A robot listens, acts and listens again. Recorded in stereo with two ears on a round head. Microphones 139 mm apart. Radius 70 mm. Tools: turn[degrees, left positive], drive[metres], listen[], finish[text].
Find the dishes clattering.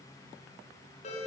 Action: listen[]
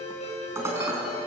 Thought: The dishes clattering: about 20° right or 160° right.
Action: turn[-20]
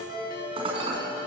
Thought: So it is at 145° right.
Action: turn[-145]
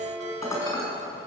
Thought: The dishes clattering is now 20° left.
Action: turn[20]
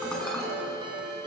Action: finish[Facing the dishes clattering, over 4 m away.]